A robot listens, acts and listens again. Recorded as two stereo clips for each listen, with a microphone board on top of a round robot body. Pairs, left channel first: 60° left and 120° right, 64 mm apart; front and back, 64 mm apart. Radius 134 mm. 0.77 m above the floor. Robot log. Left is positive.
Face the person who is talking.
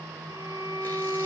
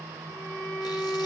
cmd idle
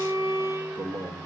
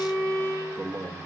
note: The man speaking: 140° right.
cmd yaw -140
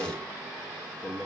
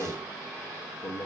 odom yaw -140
end: Facing the man speaking.